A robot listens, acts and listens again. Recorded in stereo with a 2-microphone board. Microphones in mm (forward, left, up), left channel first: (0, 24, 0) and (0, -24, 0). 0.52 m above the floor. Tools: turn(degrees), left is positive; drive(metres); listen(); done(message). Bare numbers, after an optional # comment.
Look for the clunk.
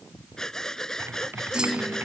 # The clunk: about 15° right or 165° right.
turn(-15)
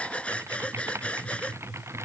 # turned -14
listen()
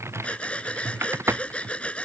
done("I heard a clunk, but can't make it out now. It was about 5° right or 150° right.")